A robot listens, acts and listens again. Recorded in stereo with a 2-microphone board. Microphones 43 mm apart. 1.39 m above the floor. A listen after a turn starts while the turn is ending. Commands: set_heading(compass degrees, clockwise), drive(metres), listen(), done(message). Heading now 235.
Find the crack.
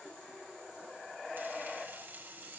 listen()
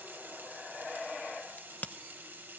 set_heading(190)
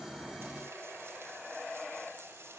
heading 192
listen()
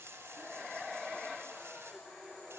done("I heard a crack, but can't make it out now. It was about straight ahead or 95° left.")